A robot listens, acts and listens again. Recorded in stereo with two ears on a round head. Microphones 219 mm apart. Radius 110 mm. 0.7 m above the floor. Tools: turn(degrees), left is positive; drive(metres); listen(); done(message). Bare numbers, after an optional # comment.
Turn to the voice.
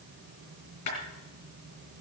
listen()
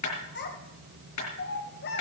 # The child speaking: about 45° left or 135° left.
turn(45)
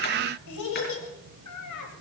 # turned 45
# So it is at 90° left.
turn(90)
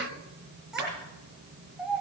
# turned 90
done("Facing the child speaking, 2 to 4 m away.")